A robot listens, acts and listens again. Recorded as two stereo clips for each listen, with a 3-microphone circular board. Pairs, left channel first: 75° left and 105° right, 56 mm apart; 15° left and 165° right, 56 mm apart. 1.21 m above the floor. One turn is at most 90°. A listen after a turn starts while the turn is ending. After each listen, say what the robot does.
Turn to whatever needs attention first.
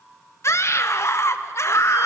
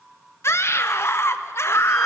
Turn 45° left.
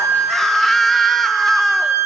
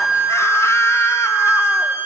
Keep listening.
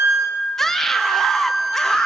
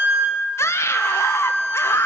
Turn 10° right.
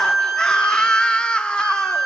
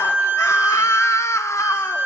Facing the scream.